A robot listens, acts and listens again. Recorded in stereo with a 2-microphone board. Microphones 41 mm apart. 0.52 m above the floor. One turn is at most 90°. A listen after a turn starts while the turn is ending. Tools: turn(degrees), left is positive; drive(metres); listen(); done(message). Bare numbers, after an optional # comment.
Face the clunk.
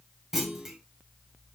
turn(-30)
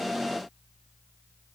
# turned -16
listen()
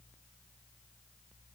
done("I heard a clunk, but can't make it out now. It was about 5° left or 155° right.")